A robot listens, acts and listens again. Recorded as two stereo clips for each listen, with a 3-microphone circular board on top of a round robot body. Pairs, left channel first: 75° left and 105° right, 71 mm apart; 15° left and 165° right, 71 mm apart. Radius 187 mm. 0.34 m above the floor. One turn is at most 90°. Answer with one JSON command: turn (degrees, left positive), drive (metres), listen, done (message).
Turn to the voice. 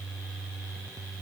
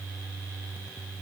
{"listen": true}
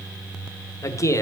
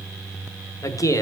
{"turn": 40}
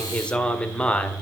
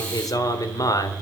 {"done": "Facing the man speaking."}